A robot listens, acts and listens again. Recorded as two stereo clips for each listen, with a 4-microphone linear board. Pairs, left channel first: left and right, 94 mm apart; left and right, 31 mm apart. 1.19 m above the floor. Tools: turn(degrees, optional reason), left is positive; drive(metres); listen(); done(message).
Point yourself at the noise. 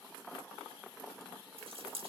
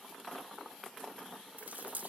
turn(degrees=-90)
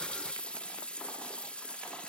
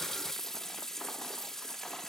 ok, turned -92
turn(degrees=15, reason="So it is at 15° left.")
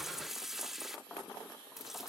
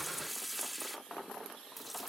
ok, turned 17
done("Found it: a running tap, straight ahead.")